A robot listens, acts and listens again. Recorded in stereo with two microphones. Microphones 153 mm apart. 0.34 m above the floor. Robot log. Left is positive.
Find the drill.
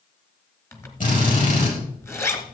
note: The drill: about 55° left or 125° left.
cmd yaw +55
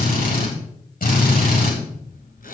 note: So it is at 65° left.
cmd yaw +65
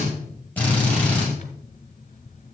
note: The drill is now 10° left.
cmd yaw +10
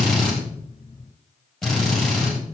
end: Facing the drill, over 4 m away.